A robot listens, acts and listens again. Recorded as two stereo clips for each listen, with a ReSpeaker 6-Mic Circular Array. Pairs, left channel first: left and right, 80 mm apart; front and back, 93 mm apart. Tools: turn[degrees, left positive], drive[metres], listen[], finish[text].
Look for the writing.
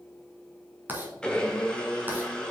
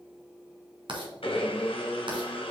Thought: The writing: 155° right.
Action: turn[-155]
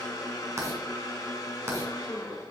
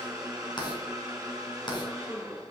Thought: The writing is now 35° right.
Action: turn[-35]
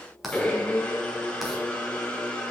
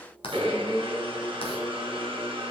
Action: finish[Facing the writing.]